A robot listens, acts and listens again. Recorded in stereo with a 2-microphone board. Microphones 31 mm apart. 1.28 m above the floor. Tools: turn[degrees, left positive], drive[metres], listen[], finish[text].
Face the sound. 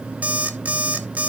Thought: The alarm clock: about 50° right or 130° right.
Action: turn[-50]
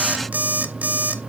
Thought: So it is at 75° right.
Action: turn[-75]
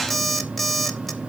Action: finish[Facing the alarm clock.]